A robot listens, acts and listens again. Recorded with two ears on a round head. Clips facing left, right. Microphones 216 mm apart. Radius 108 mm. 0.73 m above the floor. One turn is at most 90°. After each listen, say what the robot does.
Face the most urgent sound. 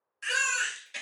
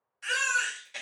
Turn 15° left.
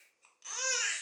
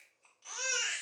Turn 90° left.
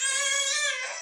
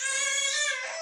Turn 45° left.
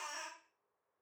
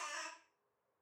Found it: a baby crying, straight ahead, under 1 m away.